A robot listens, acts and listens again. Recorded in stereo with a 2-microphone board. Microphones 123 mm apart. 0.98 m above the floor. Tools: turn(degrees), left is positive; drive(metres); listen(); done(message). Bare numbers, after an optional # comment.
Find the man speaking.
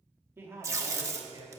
# The man speaking: about 35° right or 145° right.
turn(-35)
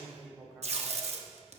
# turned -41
# So it is at 10° right.
turn(-10)
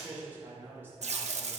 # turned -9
# The man speaking is now 20° right.
turn(-20)
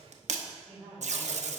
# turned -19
done("Found it: a man speaking, straight ahead.")